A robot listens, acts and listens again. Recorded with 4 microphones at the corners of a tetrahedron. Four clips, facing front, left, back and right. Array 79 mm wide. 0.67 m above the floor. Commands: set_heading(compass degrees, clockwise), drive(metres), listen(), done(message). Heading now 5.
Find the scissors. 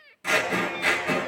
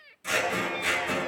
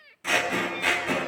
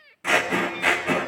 set_heading(85)
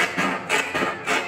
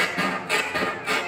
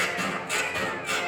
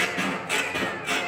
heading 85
set_heading(70)
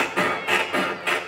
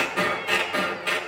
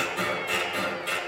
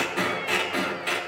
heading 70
done("Facing the scissors.")